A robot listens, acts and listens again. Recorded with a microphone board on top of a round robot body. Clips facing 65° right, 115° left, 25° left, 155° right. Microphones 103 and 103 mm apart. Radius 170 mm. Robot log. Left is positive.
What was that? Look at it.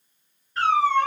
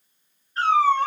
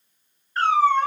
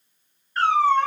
note: The cat meowing: 55° right.
cmd yaw -55
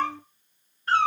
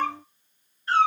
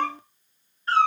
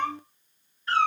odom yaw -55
note: The cat meowing is now 35° right.
cmd yaw -35
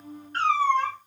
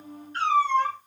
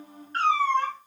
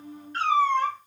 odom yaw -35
note: The cat meowing is now 35° right.
cmd yaw -35
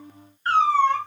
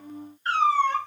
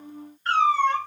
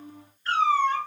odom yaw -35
note: The cat meowing is now 15° right.
cmd yaw -15
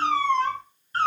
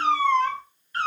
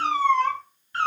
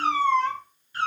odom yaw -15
note: The cat meowing is now 10° right.
cmd yaw -10
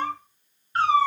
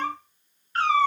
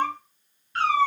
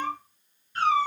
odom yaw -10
end: Facing the cat meowing, 1 to 2 m away.